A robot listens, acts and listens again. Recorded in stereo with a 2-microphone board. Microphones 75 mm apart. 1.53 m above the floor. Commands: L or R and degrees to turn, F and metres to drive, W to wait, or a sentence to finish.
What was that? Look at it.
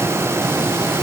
W
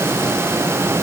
W
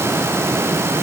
I can't make out anything.